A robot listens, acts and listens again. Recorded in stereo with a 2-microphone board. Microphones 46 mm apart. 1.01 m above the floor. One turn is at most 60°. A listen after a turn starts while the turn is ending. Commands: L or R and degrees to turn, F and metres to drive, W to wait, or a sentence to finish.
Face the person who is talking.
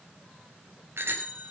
W
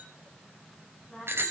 L30
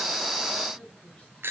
W
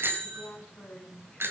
L60
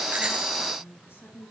L60
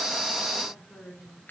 L20
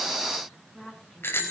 Facing the woman speaking, over 4 m away.